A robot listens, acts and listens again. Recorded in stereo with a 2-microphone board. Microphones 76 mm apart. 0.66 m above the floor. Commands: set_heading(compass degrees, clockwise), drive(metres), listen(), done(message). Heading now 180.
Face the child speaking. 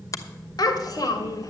set_heading(130)
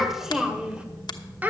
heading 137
set_heading(162)
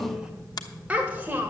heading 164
set_heading(189)
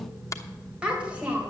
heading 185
set_heading(205)
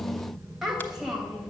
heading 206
done("Facing the child speaking.")